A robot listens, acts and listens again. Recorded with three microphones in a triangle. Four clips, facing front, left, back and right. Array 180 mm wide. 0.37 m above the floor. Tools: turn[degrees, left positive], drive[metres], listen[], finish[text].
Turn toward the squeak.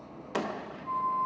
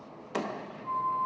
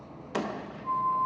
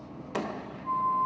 Action: listen[]
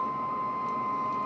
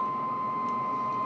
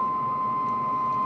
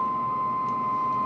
Action: listen[]
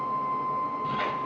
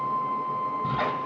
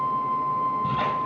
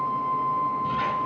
Thought: The squeak: 115° left.
Action: turn[115]
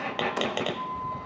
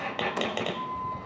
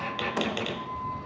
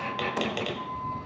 Thought: The squeak is now 30° left.
Action: turn[30]
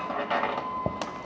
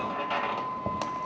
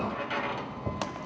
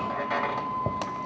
Thought: The squeak is now 10° right.
Action: turn[-10]
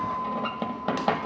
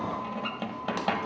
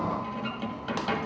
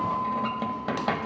Action: finish[Facing the squeak.]